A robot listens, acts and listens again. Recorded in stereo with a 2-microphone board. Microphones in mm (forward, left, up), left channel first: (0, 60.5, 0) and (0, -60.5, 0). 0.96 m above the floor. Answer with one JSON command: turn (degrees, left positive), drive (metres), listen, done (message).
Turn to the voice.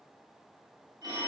{"listen": true}
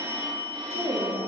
{"turn": -65}
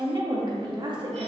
{"turn": -45}
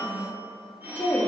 {"turn": 15}
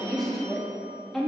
{"done": "Found it: a woman speaking, straight ahead, 1 to 2 m away."}